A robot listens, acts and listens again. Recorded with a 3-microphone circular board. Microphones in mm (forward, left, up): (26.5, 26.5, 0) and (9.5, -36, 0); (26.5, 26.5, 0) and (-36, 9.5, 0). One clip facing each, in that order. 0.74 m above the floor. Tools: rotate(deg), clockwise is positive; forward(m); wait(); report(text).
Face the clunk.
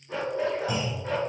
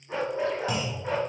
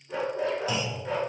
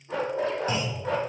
rotate(115)
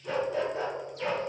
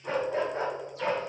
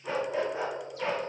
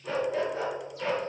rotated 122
report("Facing where the clunk came from. I can't hear it now.")